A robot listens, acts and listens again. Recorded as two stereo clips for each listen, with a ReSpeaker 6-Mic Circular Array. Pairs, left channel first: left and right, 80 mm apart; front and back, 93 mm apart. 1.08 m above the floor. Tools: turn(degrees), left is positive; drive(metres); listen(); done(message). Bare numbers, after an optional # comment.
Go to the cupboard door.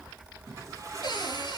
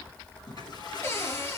# The cupboard door: 60° left.
turn(60)
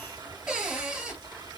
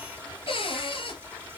# The cupboard door is now 15° right.
turn(-15)
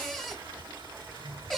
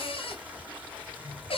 drive(1.0)
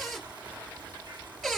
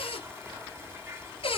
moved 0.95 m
drive(1.0)
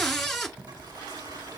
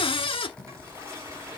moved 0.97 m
drive(1.0)
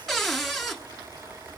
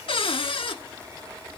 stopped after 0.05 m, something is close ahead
done("I am next to the cupboard door.")